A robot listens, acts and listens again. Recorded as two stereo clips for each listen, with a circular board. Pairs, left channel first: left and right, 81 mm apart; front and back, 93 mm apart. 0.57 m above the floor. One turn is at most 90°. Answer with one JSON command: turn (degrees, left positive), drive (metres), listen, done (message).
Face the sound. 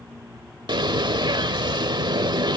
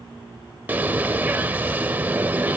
{"turn": -90}
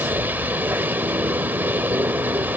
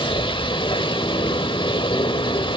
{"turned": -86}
{"turn": -25}
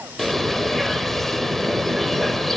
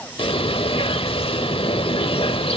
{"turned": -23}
{"done": "Facing the bird."}